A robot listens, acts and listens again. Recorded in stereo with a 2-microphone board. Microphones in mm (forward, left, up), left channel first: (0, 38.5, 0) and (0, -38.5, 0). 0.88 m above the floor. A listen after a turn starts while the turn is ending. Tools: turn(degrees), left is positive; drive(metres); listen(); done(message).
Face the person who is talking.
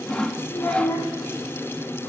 turn(degrees=50)
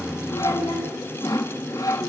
turn(degrees=85)
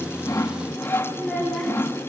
done("Facing the child speaking, over 4 m away.")